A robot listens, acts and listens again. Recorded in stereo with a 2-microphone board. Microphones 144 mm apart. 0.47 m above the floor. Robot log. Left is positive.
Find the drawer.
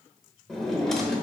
cmd yaw +30
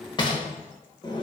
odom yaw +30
note: So it is at 145° left.
cmd yaw +145
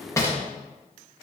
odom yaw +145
note: The drawer is now 20° left.
cmd yaw +20
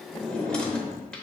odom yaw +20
end: Found it: a drawer, straight ahead, under 1 m away.